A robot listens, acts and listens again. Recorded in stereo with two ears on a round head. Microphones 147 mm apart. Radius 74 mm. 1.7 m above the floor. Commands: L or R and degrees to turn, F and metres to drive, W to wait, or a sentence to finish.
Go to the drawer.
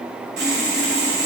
W
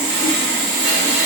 W
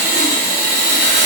I can't make out a drawer, only sawing.